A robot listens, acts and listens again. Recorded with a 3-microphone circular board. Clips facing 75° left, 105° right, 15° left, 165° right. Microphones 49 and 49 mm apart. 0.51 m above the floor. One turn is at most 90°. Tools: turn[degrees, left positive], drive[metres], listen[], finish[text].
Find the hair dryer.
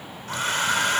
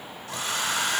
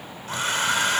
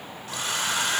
Thought: The hair dryer: 50° left.
Action: turn[50]
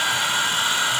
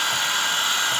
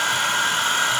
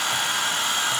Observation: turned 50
Action: finish[Found it: a hair dryer, straight ahead, 1 to 2 m away.]